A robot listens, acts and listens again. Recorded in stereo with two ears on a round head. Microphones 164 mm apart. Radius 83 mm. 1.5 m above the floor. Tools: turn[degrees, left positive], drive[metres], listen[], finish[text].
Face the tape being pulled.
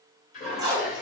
Thought: The tape being pulled: about 20° right or 160° right.
Action: turn[-20]
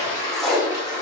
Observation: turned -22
Action: finish[Found it: tape being pulled, straight ahead, under 1 m away.]